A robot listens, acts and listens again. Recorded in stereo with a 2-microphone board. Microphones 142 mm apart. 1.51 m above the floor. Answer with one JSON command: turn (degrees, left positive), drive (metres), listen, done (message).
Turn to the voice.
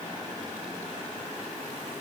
{"listen": true}
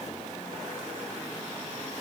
{"listen": true}
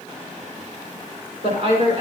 {"turn": -55}
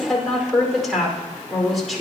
{"done": "Found it: a woman speaking, straight ahead."}